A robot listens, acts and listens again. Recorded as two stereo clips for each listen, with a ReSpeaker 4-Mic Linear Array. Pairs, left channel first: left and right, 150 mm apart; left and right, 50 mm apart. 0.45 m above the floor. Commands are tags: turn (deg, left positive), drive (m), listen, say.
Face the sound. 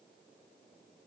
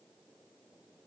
<listen/>
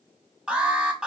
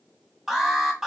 <turn deg="-30"/>
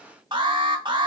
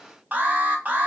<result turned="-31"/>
<turn deg="-145"/>
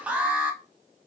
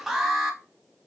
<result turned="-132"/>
<turn deg="-10"/>
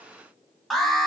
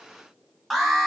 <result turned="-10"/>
<say>Found it: an alarm, straight ahead, under 1 m away.</say>